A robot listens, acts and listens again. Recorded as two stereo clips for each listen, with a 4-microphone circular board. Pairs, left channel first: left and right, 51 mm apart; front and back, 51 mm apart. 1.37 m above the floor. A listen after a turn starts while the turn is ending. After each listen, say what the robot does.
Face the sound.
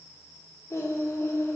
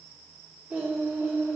Turn 125° left.
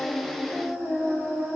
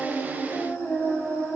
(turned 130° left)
Turn 15° left.
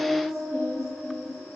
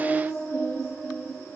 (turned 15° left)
Found it: singing, straight ahead, 2 to 4 m away.